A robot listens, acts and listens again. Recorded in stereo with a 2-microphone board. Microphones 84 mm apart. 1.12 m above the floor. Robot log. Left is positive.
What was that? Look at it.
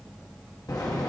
note: The zipper: about 50° left or 130° left.
cmd yaw +50
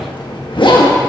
note: So it is at 80° left.
cmd yaw +80
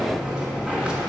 note: The zipper is now 10° right.
cmd yaw -10
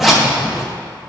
end: Found it: a zipper, straight ahead.